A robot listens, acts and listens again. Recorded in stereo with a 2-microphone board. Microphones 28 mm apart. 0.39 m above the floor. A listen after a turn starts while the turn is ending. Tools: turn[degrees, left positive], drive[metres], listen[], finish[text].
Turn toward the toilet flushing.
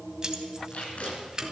Action: listen[]
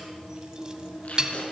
Action: listen[]
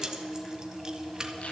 Action: finish[I can't make out a toilet flushing, only keys jangling and tape being pulled.]